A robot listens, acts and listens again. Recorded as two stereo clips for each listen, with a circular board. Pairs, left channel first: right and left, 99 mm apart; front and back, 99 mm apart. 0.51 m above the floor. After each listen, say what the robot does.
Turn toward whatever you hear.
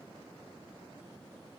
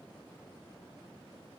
Keep listening.
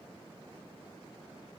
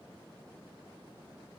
Keep listening.
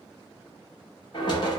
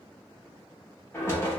Turn 60° right.
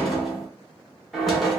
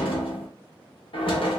Facing the knocking, under 1 m away.